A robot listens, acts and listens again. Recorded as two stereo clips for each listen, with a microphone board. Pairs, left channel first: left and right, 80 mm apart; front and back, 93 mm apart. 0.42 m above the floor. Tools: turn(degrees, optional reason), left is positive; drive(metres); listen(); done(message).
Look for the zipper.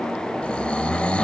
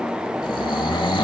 listen()
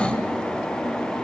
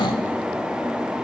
listen()
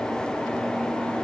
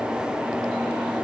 done("I can't make out a zipper to turn to.")